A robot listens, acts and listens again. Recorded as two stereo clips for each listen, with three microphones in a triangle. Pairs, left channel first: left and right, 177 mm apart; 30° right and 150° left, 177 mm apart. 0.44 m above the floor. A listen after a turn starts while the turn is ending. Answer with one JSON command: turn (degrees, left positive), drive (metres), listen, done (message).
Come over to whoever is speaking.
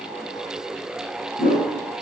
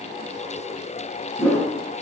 {"listen": true}
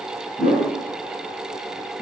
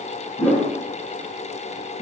{"listen": true}
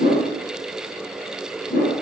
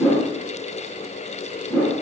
{"done": "I can't make out anyone speaking, only a whoosh."}